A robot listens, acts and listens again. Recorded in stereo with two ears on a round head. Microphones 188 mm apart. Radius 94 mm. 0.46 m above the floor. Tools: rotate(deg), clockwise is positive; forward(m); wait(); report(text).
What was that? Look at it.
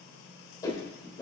rotate(-15)
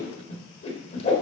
rotate(-150)
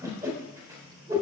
rotate(20)
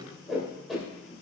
report("Facing the whoosh, 1 to 2 m away.")